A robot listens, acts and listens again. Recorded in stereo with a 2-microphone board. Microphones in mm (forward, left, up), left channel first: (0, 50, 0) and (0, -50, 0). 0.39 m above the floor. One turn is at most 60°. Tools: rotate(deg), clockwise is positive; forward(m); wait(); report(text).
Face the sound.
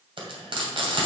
rotate(60)
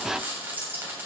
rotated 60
rotate(25)
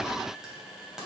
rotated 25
report("Facing the frying, 2 to 4 m away.")